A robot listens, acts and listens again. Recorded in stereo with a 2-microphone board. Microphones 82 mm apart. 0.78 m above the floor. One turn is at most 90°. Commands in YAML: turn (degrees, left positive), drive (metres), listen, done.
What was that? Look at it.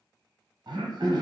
turn: -65
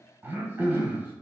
turn: -25
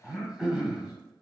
done: "Found it: throat clearing, straight ahead, 1 to 2 m away."